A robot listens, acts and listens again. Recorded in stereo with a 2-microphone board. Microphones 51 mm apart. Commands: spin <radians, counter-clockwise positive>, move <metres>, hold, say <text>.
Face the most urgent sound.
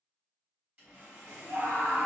spin -0.96
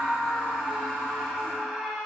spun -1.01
spin -0.17
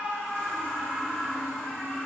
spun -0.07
say Facing the scream, under 1 m away.